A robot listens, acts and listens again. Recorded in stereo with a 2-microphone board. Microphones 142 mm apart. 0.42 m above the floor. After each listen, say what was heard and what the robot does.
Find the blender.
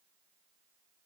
Keep listening.
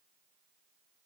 Keep listening.
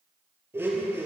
The blender: about 15° right or 165° right. Turn 15° right.
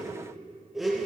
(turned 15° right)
Facing the blender, 2 to 4 m away.